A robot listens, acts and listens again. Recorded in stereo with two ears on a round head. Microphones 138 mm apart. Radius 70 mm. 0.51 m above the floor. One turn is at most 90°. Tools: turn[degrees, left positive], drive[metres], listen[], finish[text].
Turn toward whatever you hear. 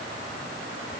Action: listen[]
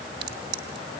Thought: The crack: about 65° right or 115° right.
Action: turn[-65]
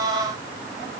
Action: listen[]
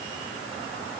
Action: finish[I heard a crack, but can't make it out now. It was about straight ahead or 50° right.]